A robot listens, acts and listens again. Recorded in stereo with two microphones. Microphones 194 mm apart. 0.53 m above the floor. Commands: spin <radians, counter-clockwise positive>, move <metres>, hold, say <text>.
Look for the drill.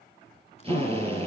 spin -0.52
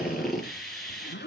say Found it: a drill, straight ahead, over 4 m away.